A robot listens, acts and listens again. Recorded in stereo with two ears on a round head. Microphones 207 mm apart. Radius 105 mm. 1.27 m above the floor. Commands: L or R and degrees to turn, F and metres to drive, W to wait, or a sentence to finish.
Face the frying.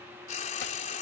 L35
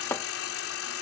L110
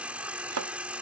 Facing the frying.